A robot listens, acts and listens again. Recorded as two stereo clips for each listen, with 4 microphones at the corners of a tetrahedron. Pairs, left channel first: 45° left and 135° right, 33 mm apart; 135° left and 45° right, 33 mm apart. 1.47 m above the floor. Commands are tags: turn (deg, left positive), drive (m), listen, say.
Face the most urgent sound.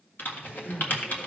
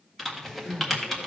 <turn deg="105"/>
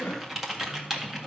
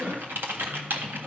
<say>Found it: crying, straight ahead.</say>